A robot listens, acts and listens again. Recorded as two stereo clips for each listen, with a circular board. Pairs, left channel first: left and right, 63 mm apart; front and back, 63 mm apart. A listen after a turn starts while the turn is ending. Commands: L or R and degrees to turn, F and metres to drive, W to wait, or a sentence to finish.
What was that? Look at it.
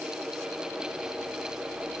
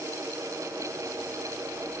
W
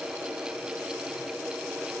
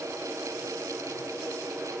W
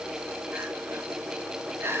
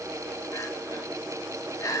R35
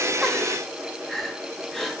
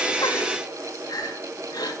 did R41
Facing the crying, 1 to 2 m away.